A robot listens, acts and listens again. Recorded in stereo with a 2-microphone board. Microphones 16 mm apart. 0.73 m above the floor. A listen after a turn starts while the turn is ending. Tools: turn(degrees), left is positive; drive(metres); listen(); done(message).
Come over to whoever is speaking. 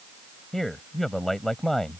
turn(degrees=30)
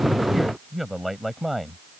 drive(metres=1.0)
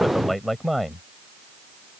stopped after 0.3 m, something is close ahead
done("Blocked. The man speaking is further on, straight ahead.")